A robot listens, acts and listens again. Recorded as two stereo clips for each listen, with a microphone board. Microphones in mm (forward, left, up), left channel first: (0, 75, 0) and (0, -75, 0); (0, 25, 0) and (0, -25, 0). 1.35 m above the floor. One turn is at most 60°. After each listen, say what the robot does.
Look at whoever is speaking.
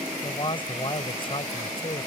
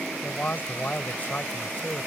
Turn 40° left.
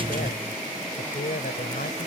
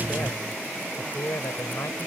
Turn 60° left.
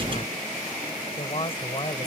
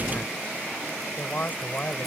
Turn 35° left.
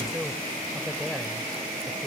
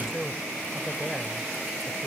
Keep listening.
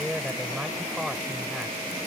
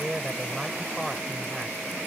Found it: a man speaking, straight ahead.